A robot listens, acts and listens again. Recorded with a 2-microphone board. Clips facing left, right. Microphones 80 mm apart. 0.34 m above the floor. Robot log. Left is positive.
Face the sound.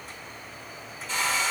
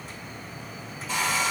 cmd yaw -30
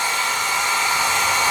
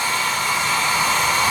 note: So it is at 25° left.
cmd yaw +25
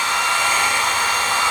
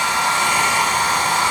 note: The hair dryer is now 15° right.
cmd yaw -15
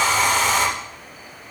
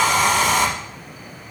end: Facing the hair dryer.